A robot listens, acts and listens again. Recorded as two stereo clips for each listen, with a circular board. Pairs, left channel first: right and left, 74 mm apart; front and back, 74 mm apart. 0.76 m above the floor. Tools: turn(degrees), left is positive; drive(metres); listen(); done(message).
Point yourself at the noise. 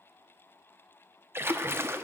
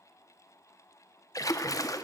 turn(degrees=35)
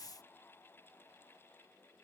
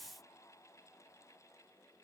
done("Facing where the splash came from. I can't hear it now.")